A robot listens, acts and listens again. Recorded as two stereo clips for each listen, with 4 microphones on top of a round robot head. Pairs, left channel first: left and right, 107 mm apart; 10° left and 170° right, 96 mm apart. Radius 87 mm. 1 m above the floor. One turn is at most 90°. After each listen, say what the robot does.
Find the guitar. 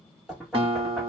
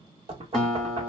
Turn 75° right.
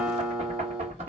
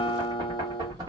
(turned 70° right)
Keep listening.
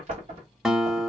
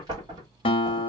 Found it: a guitar, straight ahead, under 1 m away.